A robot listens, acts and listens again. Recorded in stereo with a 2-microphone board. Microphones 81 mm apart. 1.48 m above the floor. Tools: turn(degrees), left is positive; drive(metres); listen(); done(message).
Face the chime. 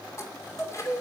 turn(degrees=35)
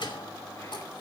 turn(degrees=110)
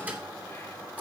turn(degrees=-20)
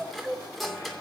done("Facing the chime, 2 to 4 m away.")